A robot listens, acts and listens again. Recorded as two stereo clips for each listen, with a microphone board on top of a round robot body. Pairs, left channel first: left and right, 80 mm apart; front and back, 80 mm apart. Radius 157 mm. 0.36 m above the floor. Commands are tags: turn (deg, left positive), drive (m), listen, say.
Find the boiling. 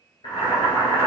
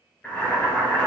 <turn deg="75"/>
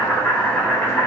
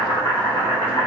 <turn deg="20"/>
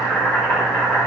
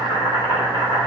<say>Facing the boiling, 1 to 2 m away.</say>